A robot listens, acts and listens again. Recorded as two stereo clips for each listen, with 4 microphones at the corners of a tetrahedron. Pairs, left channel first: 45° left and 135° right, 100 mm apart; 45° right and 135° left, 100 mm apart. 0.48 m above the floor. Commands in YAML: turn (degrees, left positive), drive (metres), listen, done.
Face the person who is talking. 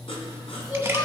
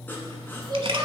turn: 95
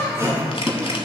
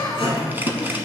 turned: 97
done: "Found it: a child speaking, straight ahead, 2 to 4 m away."